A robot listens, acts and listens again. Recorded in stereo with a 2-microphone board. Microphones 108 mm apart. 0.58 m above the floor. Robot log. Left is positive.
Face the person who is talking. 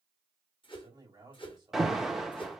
note: The man speaking: about 35° right or 145° right.
cmd yaw -35
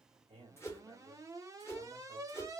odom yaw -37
note: So it is at 105° right.
cmd yaw -105
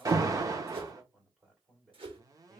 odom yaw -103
end: Facing the man speaking.